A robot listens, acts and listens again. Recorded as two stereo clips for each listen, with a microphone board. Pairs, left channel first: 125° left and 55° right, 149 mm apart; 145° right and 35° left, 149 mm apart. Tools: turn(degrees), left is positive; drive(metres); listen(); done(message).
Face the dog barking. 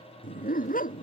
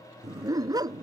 turn(degrees=100)
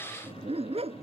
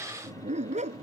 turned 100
done("Facing the dog barking.")